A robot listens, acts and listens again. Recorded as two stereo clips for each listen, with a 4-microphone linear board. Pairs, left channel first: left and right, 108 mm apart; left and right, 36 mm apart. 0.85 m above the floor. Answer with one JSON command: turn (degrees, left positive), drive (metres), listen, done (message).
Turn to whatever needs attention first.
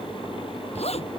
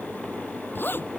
{"listen": true}
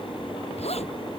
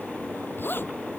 {"listen": true}
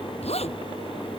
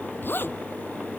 {"done": "I can't make out anything urgent, only a zipper."}